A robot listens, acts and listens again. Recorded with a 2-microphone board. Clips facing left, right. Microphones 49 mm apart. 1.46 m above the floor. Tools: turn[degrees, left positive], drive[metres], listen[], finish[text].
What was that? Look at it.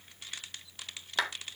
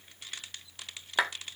Thought: The clap: about 20° right or 160° right.
Action: turn[-20]
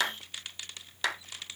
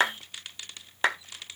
Thought: So it is at 145° right.
Action: turn[-145]
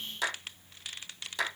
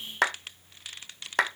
Thought: The clap is now 60° right.
Action: turn[-60]
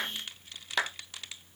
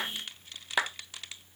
Thought: The clap is now 10° right.
Action: turn[-10]
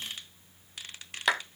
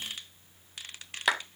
Action: finish[Found it: a clap, straight ahead.]